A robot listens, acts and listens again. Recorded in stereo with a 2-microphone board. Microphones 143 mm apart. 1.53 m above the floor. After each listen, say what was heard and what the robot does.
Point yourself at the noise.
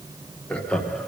Turn 30° left.
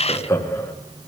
So it is at 165° left. Turn 165° left.
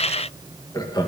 The laughter is now 30° left. Turn 30° left.
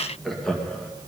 Found it: laughter, straight ahead, 2 to 4 m away.